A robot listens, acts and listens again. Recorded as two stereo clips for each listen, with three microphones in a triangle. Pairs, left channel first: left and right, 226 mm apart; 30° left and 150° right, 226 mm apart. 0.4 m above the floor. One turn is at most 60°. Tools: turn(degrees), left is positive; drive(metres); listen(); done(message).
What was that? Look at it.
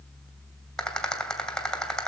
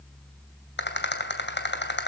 done("Facing the rattle, 2 to 4 m away.")